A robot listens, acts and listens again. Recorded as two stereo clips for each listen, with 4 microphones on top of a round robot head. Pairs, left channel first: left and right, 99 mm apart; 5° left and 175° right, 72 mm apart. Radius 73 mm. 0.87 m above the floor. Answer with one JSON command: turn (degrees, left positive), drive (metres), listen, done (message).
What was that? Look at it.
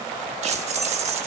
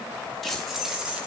{"turn": -95}
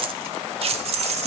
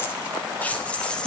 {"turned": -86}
{"turn": -80}
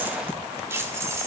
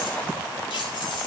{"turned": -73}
{"turn": -25}
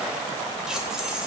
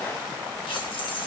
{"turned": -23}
{"done": "Found it: keys jangling, straight ahead."}